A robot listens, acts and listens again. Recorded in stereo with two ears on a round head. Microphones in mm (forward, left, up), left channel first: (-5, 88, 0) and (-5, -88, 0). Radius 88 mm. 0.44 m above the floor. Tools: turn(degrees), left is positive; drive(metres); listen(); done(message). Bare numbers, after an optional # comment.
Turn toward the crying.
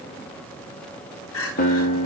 turn(90)
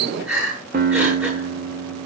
done("Found it: crying, straight ahead, over 4 m away.")